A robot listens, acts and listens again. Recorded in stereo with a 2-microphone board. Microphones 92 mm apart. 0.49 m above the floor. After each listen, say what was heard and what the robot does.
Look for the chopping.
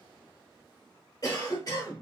Keep listening.
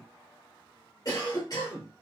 Keep listening.
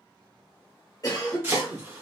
The chopping: about 25° right or 155° right. Turn 25° right.
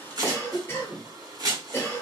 So it is at 130° right. Turn 130° right.
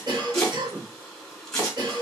The chopping is now 10° left. Turn 10° left.
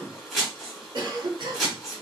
Found it: chopping, straight ahead, 1 to 2 m away.